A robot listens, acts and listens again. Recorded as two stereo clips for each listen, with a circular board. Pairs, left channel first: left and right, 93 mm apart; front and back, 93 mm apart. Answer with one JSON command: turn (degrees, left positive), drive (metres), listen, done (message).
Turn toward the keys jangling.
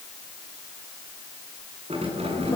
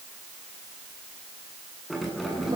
{"turn": -95}
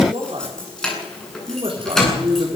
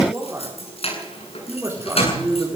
{"done": "Facing the keys jangling, over 4 m away."}